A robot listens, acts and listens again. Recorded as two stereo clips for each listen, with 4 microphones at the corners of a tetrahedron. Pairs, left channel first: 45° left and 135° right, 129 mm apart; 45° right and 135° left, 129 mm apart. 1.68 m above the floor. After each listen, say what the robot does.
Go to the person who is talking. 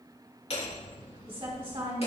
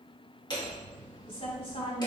Turn 85° right.
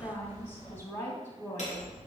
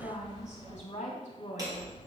Turn 20° right.
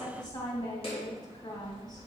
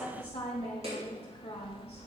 Drive 1.0 m forward.
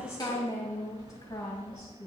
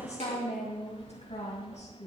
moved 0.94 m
Drive 1.0 m forward.
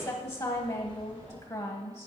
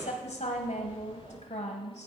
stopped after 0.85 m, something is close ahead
Arrived at the woman speaking, straight ahead.